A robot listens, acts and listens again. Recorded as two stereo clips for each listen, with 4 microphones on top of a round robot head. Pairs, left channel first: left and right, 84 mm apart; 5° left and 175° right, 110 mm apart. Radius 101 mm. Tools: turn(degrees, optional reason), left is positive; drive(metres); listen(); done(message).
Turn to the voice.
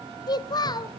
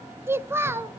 turn(degrees=120, reason="The child speaking: 120° left.")
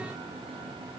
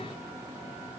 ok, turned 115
listen()
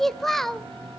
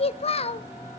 done("Facing the child speaking, 1 to 2 m away.")